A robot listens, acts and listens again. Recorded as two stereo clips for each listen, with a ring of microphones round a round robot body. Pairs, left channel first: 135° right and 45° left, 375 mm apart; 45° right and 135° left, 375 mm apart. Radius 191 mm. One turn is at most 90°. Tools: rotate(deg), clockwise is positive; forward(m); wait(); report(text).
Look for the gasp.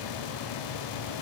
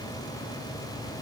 wait()
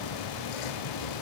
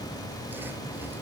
wait()
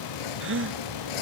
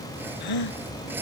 rotate(15)
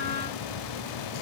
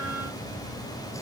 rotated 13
report("Facing where the gasp came from. I can't hear it now.")